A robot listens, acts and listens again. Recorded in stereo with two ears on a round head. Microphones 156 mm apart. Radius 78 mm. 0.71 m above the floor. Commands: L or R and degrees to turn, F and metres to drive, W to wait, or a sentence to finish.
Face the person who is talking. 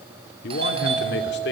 L70
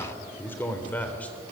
L10
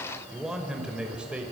Facing the man speaking, 2 to 4 m away.